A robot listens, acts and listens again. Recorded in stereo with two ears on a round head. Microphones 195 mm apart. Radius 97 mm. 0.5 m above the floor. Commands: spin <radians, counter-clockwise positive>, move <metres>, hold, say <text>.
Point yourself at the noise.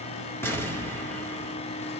spin 0.52
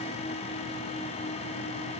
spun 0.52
hold
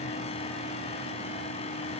say I heard an explosion, but can't make it out now. It was about 20° right or 140° left.